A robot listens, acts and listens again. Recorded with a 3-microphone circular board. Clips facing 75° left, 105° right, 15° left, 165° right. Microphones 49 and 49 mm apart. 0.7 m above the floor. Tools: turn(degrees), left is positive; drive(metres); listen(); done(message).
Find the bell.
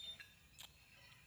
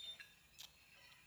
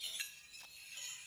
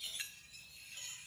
listen()
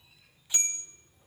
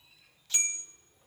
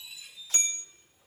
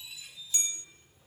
turn(degrees=-30)
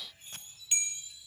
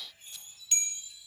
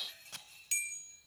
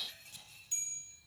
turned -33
done("Facing the bell, under 1 m away.")